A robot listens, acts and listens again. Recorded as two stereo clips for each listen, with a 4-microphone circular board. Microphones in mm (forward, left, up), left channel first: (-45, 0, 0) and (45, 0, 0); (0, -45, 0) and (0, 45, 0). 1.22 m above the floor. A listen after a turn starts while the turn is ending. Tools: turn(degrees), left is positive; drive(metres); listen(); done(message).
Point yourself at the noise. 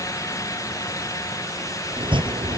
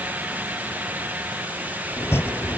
turn(degrees=-25)
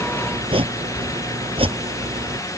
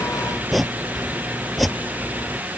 done("Facing the chopping.")